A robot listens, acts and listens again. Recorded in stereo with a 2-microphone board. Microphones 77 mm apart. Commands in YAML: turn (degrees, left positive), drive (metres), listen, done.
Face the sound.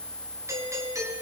turn: -45
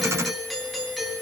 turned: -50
done: "Facing the doorbell, over 4 m away."